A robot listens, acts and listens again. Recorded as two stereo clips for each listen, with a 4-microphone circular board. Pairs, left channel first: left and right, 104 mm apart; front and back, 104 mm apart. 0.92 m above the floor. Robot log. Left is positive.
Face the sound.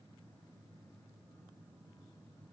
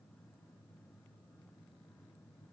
cmd idle
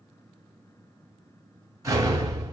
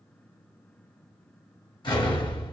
note: The explosion: 35° right.
cmd yaw -35
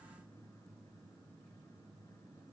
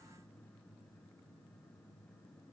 end: Facing where the explosion came from. I can't hear it now.